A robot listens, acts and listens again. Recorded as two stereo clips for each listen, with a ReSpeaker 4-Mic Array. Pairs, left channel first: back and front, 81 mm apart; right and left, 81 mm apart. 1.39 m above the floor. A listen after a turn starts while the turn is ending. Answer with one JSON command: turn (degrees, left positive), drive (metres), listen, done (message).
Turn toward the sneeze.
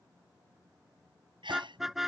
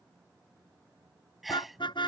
{"done": "Found it: a sneeze, straight ahead."}